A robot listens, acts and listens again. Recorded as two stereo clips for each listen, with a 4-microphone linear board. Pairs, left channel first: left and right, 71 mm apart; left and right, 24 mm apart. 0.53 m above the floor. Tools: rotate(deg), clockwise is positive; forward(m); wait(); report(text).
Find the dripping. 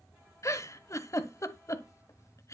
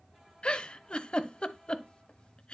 wait()
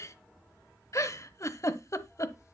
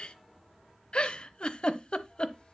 wait()
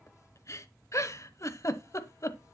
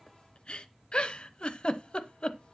report("I can't make out dripping, only a giggle.")